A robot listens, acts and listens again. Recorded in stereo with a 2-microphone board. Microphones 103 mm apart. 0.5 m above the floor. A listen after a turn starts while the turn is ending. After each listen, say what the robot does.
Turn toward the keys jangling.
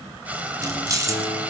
Turn 35° right.
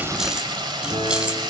Turn 10° right.
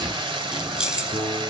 Facing the keys jangling.